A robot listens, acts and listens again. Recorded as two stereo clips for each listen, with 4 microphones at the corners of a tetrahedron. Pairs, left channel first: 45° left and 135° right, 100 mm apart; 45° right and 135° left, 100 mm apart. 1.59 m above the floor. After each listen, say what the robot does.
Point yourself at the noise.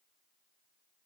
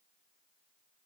Keep listening.
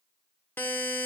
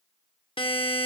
Turn 25° right.
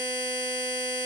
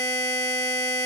Facing the buzzer.